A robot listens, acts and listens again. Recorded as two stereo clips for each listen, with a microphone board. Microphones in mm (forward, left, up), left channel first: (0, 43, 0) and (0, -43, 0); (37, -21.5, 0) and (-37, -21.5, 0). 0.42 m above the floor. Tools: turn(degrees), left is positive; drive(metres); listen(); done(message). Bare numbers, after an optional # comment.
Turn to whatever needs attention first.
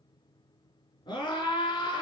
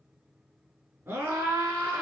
# The scream: 120° left.
turn(120)
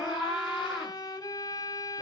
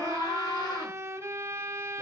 done("Facing the scream, over 4 m away.")